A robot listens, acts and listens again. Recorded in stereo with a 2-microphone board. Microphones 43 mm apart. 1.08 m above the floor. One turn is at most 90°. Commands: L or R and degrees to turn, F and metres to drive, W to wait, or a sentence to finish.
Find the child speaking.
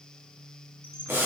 W
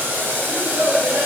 R65
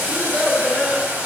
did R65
R10
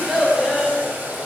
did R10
R10
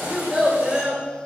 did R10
R10
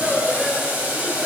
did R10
Facing the child speaking, 2 to 4 m away.